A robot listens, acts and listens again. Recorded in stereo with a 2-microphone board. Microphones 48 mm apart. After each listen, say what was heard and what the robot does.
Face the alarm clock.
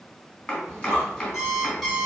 Turn 30° left.
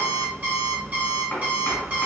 So it is at 35° right. Turn 35° right.
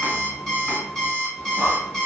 Found it: an alarm clock, straight ahead, 1 to 2 m away.